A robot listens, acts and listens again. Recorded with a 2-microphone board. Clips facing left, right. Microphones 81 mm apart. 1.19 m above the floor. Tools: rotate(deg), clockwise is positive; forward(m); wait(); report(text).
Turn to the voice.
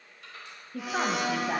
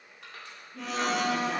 rotate(-65)
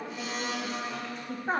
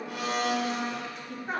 rotate(-35)
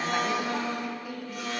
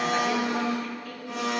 rotate(-10)
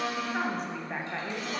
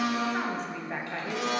report("Facing the woman speaking, 1 to 2 m away.")